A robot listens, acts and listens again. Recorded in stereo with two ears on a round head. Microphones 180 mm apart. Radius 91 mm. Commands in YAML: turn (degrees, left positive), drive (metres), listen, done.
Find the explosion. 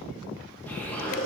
turn: 30
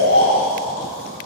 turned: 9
listen: true
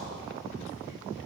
done: "I heard an explosion, but can't make it out now. It was about straight ahead or 165° left."